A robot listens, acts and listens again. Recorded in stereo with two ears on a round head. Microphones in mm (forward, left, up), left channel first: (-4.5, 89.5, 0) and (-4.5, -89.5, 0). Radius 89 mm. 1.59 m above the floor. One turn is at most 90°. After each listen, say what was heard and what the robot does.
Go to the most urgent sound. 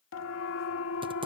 Turn 90° left.
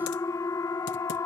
So it is at 15° left. Turn 15° left.
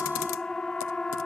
Drive 1.0 m forward.
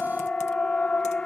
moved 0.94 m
Drive 1.0 m forward.
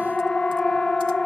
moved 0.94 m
Drive 1.0 m forward.
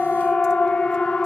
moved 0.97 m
Drive 1.0 m forward.
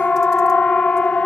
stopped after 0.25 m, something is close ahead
I am next to the siren.